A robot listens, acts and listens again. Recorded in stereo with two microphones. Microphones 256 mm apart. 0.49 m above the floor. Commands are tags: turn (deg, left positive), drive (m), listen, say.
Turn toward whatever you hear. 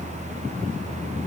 <listen/>
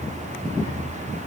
<listen/>
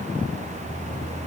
<say>I can't make out anything to turn to.</say>